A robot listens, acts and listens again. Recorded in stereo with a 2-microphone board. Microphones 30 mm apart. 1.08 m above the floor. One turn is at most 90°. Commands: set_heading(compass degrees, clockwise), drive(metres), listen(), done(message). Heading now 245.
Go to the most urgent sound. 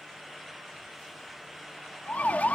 set_heading(185)
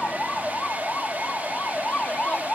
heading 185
set_heading(125)
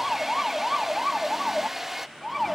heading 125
drive(1.0)
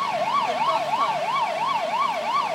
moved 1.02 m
drive(1.0)
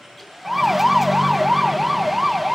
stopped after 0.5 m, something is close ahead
done("Arrived at the siren, straight ahead.")